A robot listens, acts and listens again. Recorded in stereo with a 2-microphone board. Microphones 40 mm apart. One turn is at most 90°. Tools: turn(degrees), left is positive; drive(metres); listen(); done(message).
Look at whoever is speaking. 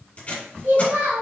turn(degrees=-90)
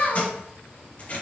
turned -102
turn(degrees=10)
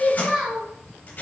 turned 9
done("Facing the child speaking.")